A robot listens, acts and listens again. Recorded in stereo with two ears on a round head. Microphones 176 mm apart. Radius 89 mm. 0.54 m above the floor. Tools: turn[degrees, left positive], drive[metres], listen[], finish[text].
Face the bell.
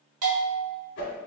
Action: turn[-90]
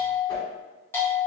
Thought: So it is at 10° left.
Action: turn[10]
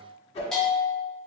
Action: finish[Facing the bell, under 1 m away.]